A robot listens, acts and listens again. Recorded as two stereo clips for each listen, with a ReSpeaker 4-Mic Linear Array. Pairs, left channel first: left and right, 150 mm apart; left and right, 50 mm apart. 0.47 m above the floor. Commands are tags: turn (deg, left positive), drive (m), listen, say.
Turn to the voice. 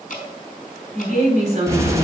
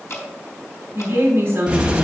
<turn deg="-50"/>
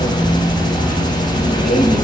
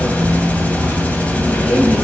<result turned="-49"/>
<listen/>
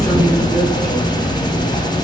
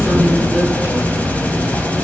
<listen/>
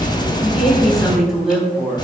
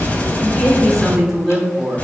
<say>Found it: a woman speaking, straight ahead.</say>